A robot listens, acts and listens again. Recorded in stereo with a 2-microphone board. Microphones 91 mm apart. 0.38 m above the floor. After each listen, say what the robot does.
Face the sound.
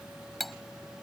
Turn 30° left.
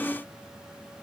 Keep listening.
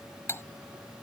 Turn 150° left.
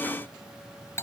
Turn 35° left.
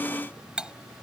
Turn 10° right.
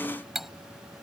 Found it: cutlery clinking, straight ahead.